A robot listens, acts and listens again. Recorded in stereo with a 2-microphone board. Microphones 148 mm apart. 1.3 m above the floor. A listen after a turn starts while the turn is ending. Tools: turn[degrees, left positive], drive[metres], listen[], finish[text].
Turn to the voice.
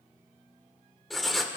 Action: listen[]
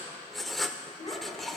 Thought: The child speaking: about 45° left or 135° left.
Action: turn[45]
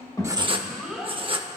Action: finish[Found it: a child speaking, straight ahead.]